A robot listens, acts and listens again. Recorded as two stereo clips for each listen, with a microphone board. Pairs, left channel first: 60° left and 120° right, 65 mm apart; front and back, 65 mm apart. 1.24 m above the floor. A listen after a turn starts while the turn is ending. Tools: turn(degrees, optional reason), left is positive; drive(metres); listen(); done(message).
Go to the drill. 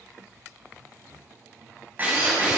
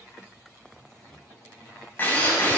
turn(degrees=-60, reason="The drill: 60° right.")
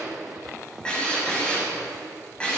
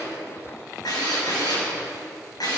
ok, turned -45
turn(degrees=-15, reason="The drill is now 15° right.")
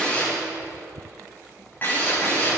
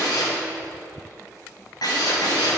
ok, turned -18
drive(metres=1.0)
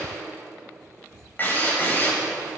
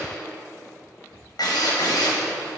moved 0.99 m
drive(metres=1.0)
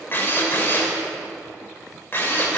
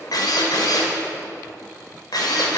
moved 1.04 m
drive(metres=1.0)
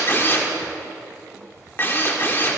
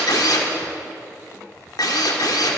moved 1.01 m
drive(metres=1.0)
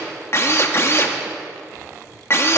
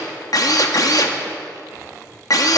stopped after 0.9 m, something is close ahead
turn(degrees=15, reason="The drill is now 15° left.")
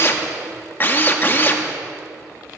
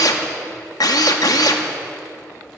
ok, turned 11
done("I am next to the drill.")